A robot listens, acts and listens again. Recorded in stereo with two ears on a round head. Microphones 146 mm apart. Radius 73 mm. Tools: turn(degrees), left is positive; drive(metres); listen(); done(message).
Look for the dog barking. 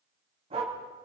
turn(degrees=-35)
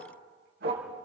turn(degrees=-110)
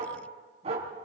turn(degrees=-40)
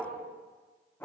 turn(degrees=15)
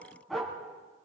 done("Facing the dog barking.")